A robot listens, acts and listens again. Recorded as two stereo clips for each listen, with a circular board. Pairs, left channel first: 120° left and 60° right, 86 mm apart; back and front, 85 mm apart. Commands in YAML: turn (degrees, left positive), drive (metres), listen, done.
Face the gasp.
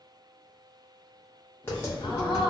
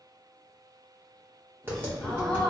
turn: 105
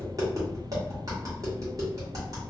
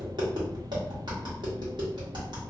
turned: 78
turn: 25
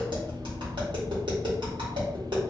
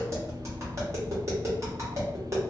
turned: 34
turn: -10
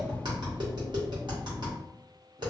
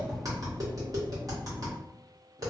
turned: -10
done: "I heard a gasp from this way, but can't make it out now."